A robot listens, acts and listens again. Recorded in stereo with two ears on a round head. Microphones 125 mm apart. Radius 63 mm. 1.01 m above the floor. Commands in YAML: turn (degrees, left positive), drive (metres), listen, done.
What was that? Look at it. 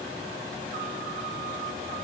listen: true
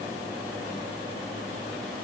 listen: true
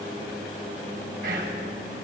turn: -90
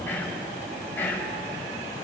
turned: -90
turn: 15
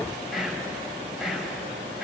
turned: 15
done: "Found it: whispering, straight ahead, over 4 m away."